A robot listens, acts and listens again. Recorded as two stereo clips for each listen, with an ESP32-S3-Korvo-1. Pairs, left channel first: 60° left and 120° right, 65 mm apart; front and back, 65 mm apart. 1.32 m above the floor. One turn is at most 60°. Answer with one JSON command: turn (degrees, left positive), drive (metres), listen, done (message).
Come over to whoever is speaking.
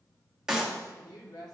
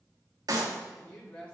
{"turn": 60}
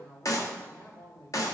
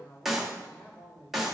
{"drive": 1.0}
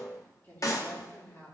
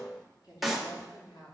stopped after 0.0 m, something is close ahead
{"done": "Something is in my way. I am facing the woman speaking but have not reached it."}